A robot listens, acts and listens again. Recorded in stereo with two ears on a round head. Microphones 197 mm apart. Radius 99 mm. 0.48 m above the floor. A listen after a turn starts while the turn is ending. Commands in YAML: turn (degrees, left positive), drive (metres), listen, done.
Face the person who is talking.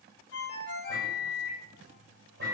listen: true
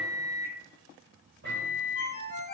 listen: true
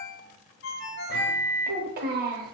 turn: -40
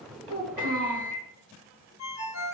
turn: -95
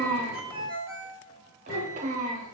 turn: -35
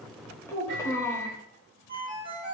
turn: 15
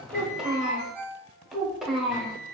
done: "Facing the child speaking, under 1 m away."